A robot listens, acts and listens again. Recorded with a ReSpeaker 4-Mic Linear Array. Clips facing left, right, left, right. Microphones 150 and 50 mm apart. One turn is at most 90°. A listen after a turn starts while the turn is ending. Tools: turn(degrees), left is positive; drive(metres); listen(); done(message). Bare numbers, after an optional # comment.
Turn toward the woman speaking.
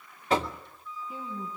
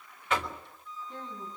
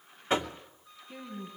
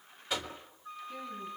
turn(30)
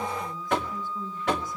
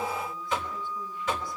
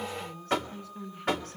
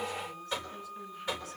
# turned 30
# So it is at 135° left.
turn(90)
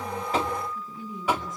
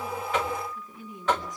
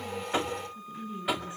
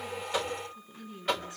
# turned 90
# The woman speaking is now 25° left.
turn(25)
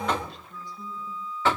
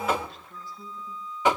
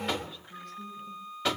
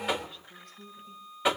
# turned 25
listen()
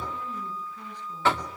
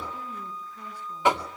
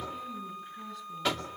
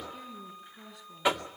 listen()
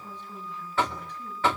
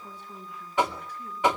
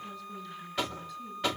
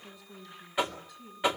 # The woman speaking is now 10° right.
turn(-10)
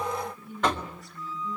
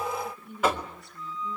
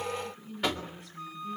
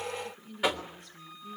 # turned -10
done("Found it: a woman speaking, straight ahead, over 4 m away.")